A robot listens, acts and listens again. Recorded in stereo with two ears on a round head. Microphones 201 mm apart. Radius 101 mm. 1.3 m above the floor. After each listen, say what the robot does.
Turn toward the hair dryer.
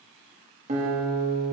Keep listening.
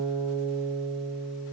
Keep listening.
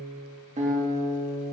I can't make out a hair dryer, only a guitar.